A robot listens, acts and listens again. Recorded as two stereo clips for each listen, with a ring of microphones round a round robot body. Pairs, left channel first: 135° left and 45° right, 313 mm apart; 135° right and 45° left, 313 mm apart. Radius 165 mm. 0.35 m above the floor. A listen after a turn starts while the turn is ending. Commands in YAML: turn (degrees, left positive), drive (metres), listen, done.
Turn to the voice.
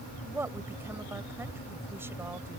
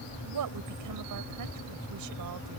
turn: 35
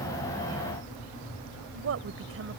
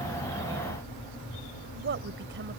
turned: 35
done: "Found it: a woman speaking, straight ahead."